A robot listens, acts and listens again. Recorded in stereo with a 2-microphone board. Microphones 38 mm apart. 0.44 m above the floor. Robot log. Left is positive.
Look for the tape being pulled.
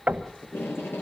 cmd yaw +90
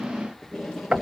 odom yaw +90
end: Found it: tape being pulled, straight ahead.